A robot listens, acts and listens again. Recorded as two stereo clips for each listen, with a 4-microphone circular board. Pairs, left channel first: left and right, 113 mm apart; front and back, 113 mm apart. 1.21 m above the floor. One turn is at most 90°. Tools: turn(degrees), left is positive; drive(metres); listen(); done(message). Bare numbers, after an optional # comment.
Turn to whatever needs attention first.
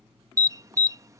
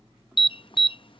# The alarm: 30° right.
turn(-30)
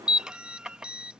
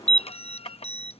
done("Facing the alarm.")